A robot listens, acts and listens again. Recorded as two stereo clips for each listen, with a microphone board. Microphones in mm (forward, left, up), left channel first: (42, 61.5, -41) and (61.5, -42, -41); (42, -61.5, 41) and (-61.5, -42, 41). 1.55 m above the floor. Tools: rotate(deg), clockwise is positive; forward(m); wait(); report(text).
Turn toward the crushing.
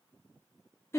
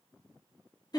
wait()
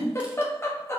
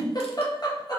wait()
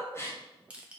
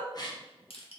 report("Found it: crushing, straight ahead, under 1 m away.")